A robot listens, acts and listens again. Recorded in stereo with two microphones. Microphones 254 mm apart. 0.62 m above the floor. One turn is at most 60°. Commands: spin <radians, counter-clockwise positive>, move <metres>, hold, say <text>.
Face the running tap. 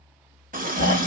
spin -0.61
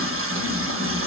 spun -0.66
spin -1.05
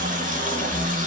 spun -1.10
spin -0.70
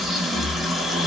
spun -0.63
hold
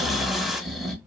say Facing the running tap.